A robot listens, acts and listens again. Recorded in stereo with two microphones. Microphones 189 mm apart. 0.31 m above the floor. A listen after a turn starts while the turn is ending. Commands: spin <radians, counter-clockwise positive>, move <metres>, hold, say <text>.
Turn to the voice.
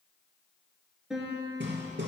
hold
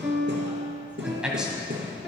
spin -0.52
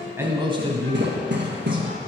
spin -2.62
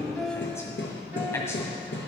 spin 0.26
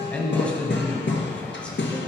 say Found it: a man speaking, straight ahead.